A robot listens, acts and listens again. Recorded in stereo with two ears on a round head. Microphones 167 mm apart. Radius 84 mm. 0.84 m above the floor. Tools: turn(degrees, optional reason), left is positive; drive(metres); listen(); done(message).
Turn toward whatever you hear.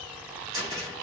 turn(degrees=-20, reason="The cupboard door: about 20° right or 160° right.")
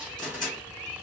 done("Found it: a cupboard door, straight ahead.")